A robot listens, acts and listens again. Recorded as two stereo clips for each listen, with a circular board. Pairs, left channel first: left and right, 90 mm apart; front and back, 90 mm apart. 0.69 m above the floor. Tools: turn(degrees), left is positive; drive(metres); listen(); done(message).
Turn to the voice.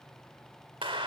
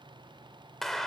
listen()
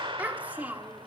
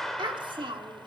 turn(degrees=-160)
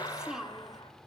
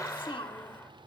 done("Found it: a child speaking, straight ahead.")